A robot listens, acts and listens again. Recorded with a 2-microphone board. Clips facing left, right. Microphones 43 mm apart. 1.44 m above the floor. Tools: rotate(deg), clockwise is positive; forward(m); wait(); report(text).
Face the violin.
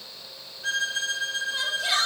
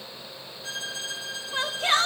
rotate(-50)
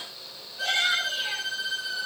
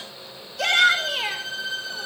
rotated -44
report("Facing the violin, over 4 m away.")